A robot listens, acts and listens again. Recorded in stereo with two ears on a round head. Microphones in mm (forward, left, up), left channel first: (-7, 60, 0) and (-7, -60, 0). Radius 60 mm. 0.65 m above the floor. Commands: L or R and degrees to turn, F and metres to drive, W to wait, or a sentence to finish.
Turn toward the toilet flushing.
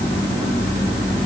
W
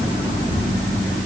W
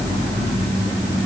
I can't make out a toilet flushing to turn to.